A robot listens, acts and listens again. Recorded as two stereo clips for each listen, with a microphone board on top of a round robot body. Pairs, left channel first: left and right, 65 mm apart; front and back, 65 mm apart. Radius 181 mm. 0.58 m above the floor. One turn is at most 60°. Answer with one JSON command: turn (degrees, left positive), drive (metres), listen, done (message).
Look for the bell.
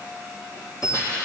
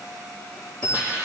{"turn": 60}
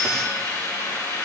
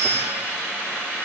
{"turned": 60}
{"done": "Facing the bell, over 4 m away."}